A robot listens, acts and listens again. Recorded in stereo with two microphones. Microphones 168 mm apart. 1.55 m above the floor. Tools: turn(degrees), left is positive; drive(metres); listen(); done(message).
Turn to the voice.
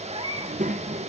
turn(degrees=-50)
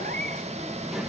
done("Found it: a child speaking, straight ahead, 1 to 2 m away.")